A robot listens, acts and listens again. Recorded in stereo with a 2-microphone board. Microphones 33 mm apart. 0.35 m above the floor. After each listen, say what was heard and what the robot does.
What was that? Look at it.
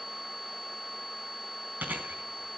The chewing: about 70° right or 110° right. Turn 70° right.
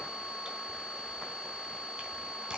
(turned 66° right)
Keep listening.
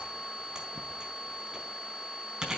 So it is at 25° right. Turn 25° right.
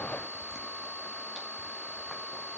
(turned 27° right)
Keep listening.
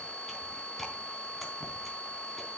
Keep listening.
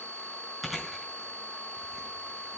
Found it: chewing, straight ahead, 2 to 4 m away.